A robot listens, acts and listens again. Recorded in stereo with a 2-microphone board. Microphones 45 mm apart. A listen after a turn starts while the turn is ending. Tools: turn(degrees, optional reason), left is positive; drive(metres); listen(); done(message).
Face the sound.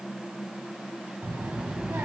turn(degrees=-90)
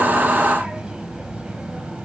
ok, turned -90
turn(degrees=-25, reason="So it is at 25° right.")
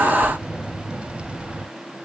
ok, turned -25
turn(degrees=-30, reason="The child speaking is now 30° right.")
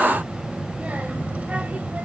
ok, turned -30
turn(degrees=-30, reason="The child speaking is now 30° right.")
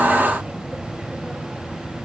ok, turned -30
turn(degrees=-20, reason="The child speaking is now 20° right.")
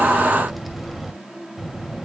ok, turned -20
done("Found it: a child speaking, straight ahead.")